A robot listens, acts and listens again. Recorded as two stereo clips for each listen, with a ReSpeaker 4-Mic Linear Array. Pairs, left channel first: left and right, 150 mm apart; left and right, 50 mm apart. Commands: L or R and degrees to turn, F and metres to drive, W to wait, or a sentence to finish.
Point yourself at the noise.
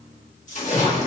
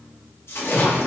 L55
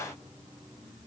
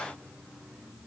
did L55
W
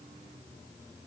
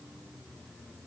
I heard a splash, but can't make it out now. It was about straight ahead or 70° left.